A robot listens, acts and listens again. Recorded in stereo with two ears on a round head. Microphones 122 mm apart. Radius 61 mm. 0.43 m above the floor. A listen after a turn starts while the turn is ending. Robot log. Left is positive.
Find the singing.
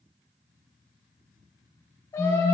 note: The singing: about 25° left or 155° left.
cmd yaw +25
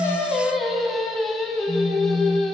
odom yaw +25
end: Facing the singing, 2 to 4 m away.